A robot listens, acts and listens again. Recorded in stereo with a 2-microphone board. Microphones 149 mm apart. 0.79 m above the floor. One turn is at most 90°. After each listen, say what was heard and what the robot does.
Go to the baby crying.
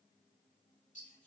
Keep listening.
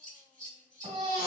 The baby crying: about 45° right or 135° right. Turn 45° right.
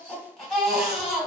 Drive 1.0 m forward.
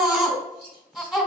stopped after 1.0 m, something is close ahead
I am next to the baby crying.